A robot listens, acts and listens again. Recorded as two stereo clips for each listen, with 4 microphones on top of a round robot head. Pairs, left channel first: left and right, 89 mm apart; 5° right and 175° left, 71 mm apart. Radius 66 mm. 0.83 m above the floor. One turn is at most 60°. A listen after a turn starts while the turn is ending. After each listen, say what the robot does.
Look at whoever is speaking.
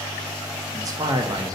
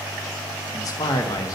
Turn 40° right.
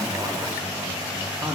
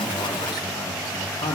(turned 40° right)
Turn 15° right.
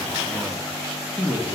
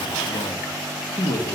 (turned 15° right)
Found it: a man speaking, straight ahead, under 1 m away.